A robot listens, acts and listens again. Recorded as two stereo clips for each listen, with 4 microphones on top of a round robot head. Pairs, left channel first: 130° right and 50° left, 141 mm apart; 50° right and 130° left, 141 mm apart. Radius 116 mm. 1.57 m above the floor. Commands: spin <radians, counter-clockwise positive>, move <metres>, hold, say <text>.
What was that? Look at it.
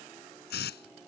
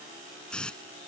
spin -2.36
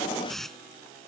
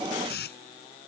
spin -0.70
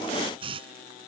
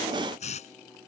say Found it: a hiss, straight ahead.